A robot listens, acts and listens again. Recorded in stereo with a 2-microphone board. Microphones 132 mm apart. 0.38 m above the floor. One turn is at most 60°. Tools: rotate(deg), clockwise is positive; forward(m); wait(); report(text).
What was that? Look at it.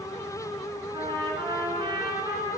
rotate(35)
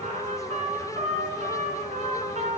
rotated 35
rotate(60)
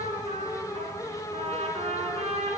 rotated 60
rotate(55)
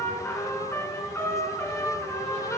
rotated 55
rotate(-20)
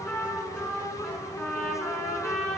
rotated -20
report("Found it: a trumpet, straight ahead.")